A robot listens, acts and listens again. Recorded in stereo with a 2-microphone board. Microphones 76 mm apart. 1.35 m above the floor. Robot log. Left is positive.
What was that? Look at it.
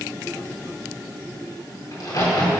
note: The crack: about 50° left or 130° left.
cmd yaw +50
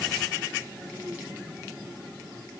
cmd idle
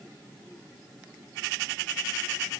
end: I heard a crack, but can't make it out now. It was about straight ahead or 80° left.